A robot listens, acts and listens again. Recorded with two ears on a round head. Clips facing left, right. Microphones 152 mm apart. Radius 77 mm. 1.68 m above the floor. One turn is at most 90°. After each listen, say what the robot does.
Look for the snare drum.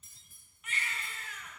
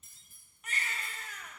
Keep listening.
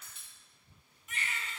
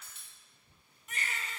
Keep listening.
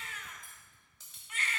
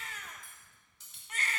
I can't make out a snare drum, only cutlery clinking and a baby crying.